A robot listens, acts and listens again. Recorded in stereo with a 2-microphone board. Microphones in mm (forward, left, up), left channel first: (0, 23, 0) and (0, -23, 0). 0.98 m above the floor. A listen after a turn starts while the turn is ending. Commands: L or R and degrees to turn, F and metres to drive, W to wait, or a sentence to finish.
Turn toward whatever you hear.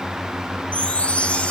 L30
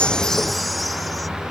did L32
W
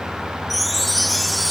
Found it: a chime, straight ahead.